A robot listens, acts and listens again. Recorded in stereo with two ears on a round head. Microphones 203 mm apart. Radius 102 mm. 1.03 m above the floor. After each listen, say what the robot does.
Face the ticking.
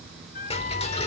Turn 25° left.
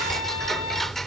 Found it: ticking, straight ahead.